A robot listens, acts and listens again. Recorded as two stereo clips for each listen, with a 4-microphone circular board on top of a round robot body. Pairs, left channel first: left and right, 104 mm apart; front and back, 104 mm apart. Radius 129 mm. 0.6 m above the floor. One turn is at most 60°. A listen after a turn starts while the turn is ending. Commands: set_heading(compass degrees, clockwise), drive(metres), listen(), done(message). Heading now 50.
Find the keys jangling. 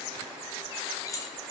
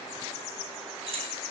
set_heading(350)
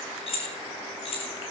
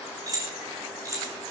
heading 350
set_heading(290)
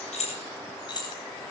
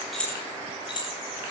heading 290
set_heading(245)
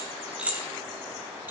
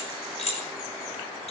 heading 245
set_heading(260)
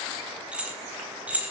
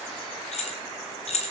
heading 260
set_heading(275)
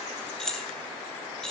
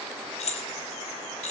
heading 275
done("Facing the keys jangling, 2 to 4 m away.")